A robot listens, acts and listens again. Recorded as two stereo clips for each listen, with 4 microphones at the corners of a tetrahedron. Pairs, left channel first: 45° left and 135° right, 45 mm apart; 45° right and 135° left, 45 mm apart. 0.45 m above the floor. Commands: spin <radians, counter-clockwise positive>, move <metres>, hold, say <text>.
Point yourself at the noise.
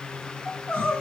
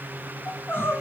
spin -0.26
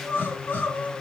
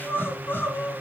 say Facing the crying.